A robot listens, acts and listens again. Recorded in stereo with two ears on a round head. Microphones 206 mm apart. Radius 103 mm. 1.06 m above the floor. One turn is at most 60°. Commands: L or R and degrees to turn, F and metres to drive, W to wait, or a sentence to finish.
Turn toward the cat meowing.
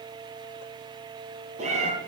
R30
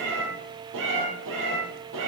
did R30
R60
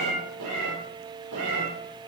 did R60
R60
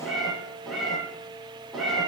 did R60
Found it: a cat meowing, straight ahead.